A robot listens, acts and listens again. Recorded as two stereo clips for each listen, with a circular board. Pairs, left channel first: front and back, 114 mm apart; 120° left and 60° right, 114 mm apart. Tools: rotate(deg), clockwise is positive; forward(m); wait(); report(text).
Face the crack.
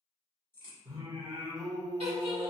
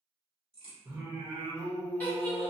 rotate(65)
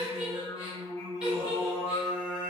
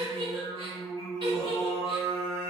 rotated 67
report("I heard a crack from this way, but can't make it out now.")